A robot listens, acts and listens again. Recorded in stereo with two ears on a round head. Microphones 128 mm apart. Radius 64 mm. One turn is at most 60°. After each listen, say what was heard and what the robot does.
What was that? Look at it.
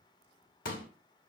The pop: about 70° left or 110° left. Turn 60° left.
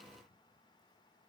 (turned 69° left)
Keep listening.
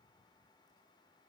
I heard a pop, but can't make it out now. It was about straight ahead or 45° left.